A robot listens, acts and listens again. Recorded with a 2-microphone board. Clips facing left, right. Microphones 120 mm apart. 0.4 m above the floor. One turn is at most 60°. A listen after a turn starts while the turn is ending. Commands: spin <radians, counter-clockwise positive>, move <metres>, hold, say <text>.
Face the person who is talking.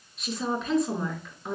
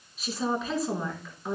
spin 0.52
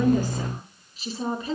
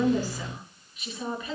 spin 1.05
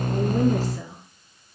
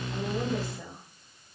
spin 1.05
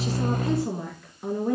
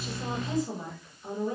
spin 1.05
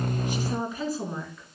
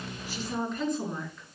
say Found it: a woman speaking, straight ahead, over 4 m away.